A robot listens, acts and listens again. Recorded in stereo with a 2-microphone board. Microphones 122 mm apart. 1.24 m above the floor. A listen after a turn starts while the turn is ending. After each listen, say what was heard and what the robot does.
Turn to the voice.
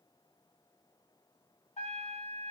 Keep listening.
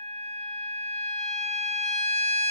Keep listening.
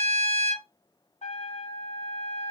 I can't make out anyone speaking to turn to.